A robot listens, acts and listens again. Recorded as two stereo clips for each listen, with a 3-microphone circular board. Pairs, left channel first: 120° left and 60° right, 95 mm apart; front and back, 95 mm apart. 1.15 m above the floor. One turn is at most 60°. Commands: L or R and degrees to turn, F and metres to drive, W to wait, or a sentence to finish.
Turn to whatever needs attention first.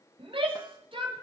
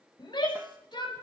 R35
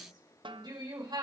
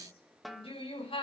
R15
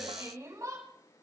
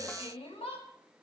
Facing the shout.